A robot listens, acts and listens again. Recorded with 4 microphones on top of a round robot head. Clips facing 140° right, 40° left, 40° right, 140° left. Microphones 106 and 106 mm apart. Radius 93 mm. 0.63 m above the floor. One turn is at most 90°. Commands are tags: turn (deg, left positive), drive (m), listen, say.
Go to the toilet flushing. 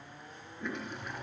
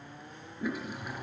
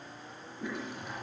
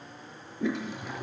<turn deg="90"/>
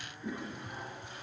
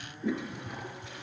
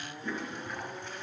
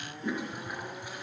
<turn deg="60"/>
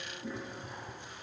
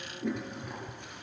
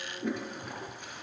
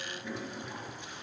<drive m="1.0"/>
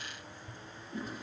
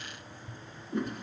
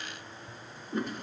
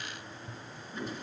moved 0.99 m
<drive m="1.0"/>
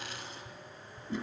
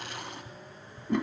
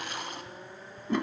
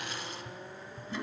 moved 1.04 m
<drive m="1.0"/>
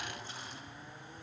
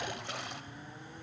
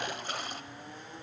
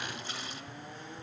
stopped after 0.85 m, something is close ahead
<say>Arrived at the toilet flushing, straight ahead.</say>